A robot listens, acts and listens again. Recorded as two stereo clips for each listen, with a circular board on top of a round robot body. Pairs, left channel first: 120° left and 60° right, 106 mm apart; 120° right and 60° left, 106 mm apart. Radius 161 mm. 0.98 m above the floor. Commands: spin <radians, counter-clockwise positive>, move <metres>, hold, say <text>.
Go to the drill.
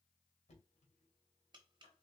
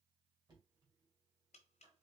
hold
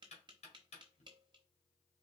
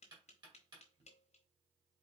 hold
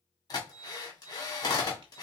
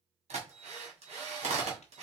spin 1.13
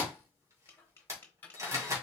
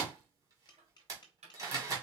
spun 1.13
move 1.0
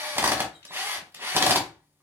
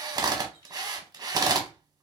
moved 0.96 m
spin 0.17
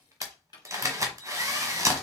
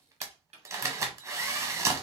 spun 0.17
move 1.0
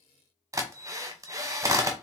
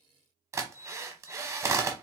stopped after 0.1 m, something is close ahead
say Arrived at the drill, straight ahead.